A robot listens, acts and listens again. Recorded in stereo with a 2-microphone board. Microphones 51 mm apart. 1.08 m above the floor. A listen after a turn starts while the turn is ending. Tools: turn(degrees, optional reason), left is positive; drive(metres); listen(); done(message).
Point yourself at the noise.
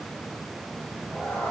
turn(degrees=45, reason="The cat meowing: about 45° left or 135° left.")
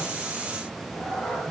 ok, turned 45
turn(degrees=20, reason="So it is at 20° left.")
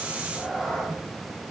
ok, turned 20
turn(degrees=15, reason="The cat meowing is now 15° left.")
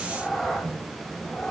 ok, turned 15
turn(degrees=20, reason="The cat meowing is now 20° left.")
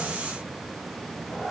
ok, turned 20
turn(degrees=10, reason="The cat meowing is now 10° left.")
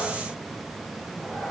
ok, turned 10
done("Facing the cat meowing, 2 to 4 m away.")